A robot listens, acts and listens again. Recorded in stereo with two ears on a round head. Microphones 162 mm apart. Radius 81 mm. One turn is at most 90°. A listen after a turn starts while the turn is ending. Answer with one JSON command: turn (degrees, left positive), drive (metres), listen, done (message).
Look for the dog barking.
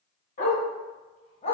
{"turn": 30}
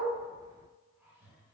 {"listen": true}
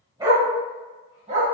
{"turn": -40}
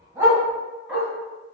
{"done": "Facing the dog barking, 1 to 2 m away."}